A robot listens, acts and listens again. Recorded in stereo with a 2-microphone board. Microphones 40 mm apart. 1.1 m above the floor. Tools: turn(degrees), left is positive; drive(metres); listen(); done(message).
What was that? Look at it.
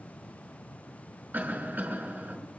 turn(degrees=-50)
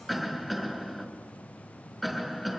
done("Found it: a cough, straight ahead, over 4 m away.")